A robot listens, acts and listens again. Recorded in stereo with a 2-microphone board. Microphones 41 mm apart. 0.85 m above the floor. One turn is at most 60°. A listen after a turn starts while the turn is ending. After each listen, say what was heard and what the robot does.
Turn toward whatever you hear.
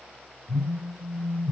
The phone buzzing: about 25° left or 155° left. Turn 25° left.
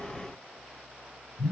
Found it: a phone buzzing, straight ahead.